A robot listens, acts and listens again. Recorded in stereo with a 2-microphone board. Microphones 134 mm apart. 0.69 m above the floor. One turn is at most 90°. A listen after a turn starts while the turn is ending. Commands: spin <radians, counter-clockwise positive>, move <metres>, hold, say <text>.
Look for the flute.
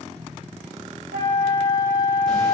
spin 0.52
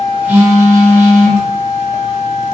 spin 0.17
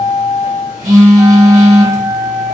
say Found it: a flute, straight ahead.